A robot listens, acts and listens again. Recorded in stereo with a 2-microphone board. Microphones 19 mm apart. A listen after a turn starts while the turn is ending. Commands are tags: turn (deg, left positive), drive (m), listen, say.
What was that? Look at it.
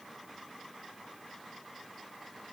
<listen/>
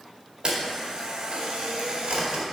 <turn deg="-55"/>
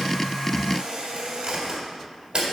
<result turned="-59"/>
<turn deg="-65"/>
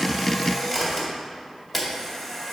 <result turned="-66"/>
<say>Found it: a camera shutter, straight ahead.</say>